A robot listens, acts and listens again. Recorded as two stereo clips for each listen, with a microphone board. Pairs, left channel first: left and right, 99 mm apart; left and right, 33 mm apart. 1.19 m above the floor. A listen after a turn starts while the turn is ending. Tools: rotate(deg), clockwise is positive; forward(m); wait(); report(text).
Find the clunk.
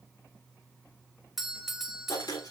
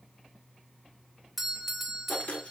wait()
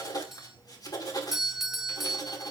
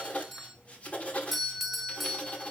wait()
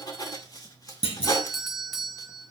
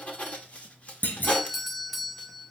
rotate(-75)
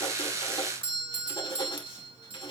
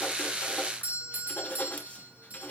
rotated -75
wait()
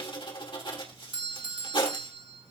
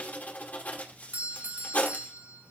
report("I heard a clunk, but can't make it out now. It was about straight ahead or 30° left.")